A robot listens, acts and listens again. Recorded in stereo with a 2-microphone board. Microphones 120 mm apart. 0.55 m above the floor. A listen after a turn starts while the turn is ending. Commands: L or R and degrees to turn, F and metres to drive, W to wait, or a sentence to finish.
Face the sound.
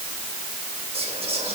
R55
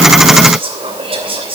R60
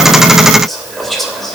Found it: whispering, straight ahead, 2 to 4 m away.